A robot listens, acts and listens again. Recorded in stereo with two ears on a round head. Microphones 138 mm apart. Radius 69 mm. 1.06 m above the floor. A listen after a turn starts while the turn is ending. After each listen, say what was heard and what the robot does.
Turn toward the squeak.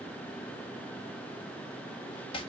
Keep listening.
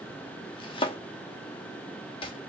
Keep listening.
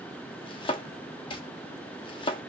I can't make out a squeak to turn to.